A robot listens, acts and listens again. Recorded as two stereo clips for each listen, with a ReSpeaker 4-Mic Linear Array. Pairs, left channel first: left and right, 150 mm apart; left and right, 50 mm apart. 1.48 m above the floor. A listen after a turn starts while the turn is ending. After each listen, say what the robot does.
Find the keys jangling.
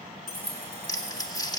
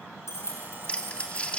Turn 90° left.
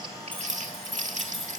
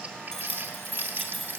Found it: keys jangling, straight ahead.